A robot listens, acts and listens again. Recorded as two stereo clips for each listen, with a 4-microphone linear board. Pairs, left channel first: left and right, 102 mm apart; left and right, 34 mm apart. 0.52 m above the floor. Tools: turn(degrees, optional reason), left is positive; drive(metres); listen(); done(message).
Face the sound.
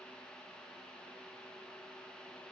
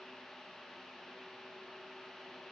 listen()
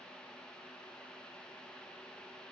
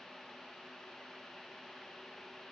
listen()
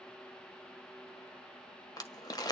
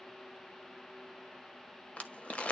turn(degrees=40, reason="The crumpling: about 40° left or 140° left.")
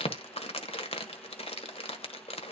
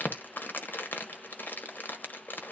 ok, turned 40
turn(degrees=95, reason="So it is at 95° left.")
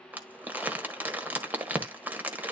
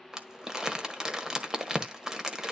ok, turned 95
turn(degrees=-20, reason="The crumpling is now 20° right.")
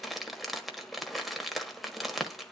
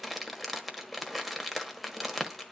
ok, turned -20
done("Facing the crumpling, 1 to 2 m away.")